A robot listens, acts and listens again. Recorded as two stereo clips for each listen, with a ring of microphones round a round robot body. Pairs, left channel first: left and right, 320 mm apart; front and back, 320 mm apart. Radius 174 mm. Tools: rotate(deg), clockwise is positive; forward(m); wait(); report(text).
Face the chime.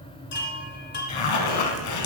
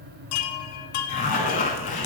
rotate(-30)
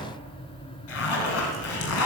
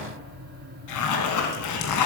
wait()
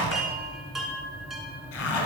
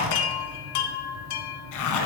report("Facing the chime.")